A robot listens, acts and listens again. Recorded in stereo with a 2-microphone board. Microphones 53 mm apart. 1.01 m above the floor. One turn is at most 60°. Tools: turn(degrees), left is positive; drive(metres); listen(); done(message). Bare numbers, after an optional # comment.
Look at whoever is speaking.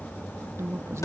# The woman speaking: about 60° right or 120° right.
turn(-60)
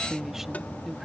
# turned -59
done("Found it: a woman speaking, straight ahead.")